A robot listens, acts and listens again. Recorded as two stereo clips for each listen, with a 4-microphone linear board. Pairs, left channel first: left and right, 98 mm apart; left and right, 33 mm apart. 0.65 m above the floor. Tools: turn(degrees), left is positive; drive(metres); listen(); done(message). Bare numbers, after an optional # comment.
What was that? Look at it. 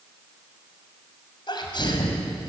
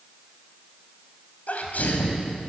# The sneeze: about 50° left or 130° left.
turn(50)
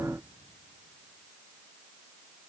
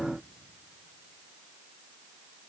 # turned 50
listen()
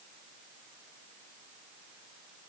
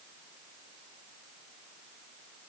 done("I heard a sneeze, but can't make it out now. It was about straight ahead or 80° left.")